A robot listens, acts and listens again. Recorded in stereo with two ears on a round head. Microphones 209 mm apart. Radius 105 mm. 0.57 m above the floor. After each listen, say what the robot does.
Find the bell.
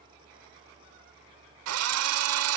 Keep listening.
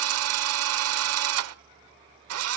Keep listening.
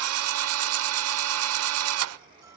I can't make out a bell to turn to.